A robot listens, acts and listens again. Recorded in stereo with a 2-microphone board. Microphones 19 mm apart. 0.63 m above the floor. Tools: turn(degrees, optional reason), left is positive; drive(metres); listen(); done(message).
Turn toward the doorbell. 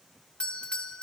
turn(degrees=65, reason="The doorbell: about 65° left or 115° left.")
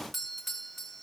done("Facing the doorbell, 2 to 4 m away.")